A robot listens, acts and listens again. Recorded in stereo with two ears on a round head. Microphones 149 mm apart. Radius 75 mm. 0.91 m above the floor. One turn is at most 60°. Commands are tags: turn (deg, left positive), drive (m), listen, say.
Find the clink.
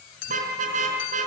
<turn deg="60"/>
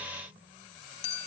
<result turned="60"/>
<turn deg="40"/>
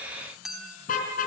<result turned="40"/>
<say>Found it: a clink, straight ahead.</say>